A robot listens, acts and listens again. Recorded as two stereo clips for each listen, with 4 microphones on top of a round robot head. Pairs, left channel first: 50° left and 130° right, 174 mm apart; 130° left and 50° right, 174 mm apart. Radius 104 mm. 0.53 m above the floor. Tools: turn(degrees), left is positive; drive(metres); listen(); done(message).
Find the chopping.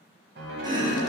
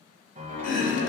turn(degrees=165)
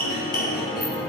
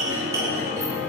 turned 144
turn(degrees=20)
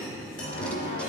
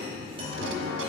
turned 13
turn(degrees=10)
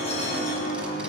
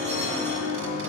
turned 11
listen()
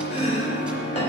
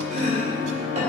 done("Found it: chopping, straight ahead.")